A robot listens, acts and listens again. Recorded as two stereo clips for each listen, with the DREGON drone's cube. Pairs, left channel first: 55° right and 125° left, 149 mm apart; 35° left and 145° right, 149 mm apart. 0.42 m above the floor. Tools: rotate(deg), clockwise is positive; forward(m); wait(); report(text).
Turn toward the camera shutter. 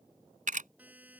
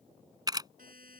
rotate(-150)
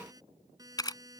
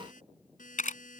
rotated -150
report("Facing the camera shutter.")